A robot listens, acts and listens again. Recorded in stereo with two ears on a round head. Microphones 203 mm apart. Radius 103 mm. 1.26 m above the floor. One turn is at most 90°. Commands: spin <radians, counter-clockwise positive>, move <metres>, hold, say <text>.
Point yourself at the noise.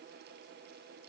hold
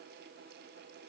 hold
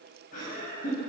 spin 0.70
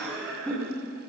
say Facing the laughter, over 4 m away.